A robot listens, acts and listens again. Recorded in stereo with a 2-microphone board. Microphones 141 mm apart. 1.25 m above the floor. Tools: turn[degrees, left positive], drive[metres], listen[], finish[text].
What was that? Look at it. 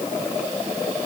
Action: listen[]
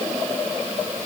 Action: listen[]
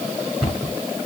Action: turn[-30]
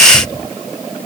Action: listen[]
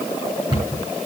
Thought: So it is at 150° right.
Action: turn[-150]
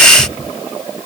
Thought: The cupboard door is now 50° right.
Action: turn[-50]
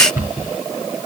Thought: The cupboard door is now 15° right.
Action: turn[-15]
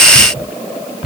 Action: finish[Facing the cupboard door.]